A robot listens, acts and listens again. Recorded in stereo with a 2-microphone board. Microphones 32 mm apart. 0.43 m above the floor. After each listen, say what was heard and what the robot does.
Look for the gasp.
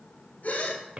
The gasp: about 55° left or 125° left. Turn 55° left.
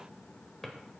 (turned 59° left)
Keep listening.
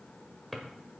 I heard a gasp, but can't make it out now. It was about 5° right or 65° left.